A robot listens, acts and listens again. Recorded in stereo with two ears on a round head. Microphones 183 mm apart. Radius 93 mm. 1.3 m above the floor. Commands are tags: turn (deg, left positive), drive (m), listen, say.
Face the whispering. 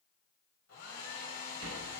<listen/>
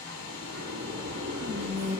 <turn deg="-40"/>
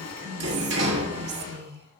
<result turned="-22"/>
<turn deg="-110"/>
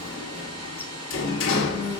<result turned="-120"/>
<turn deg="10"/>
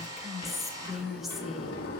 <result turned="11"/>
<say>Facing the whispering.</say>